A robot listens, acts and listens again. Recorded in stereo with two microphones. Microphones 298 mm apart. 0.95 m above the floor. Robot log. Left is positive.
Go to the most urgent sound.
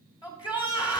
note: The shout: about 15° left or 165° left.
cmd yaw +15
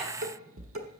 cmd idle
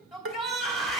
cmd fwd 1.0
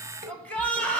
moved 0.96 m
cmd fwd 1.0
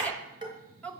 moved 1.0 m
cmd fwd 1.0
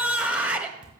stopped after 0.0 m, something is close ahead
end: Arrived at the shout, straight ahead.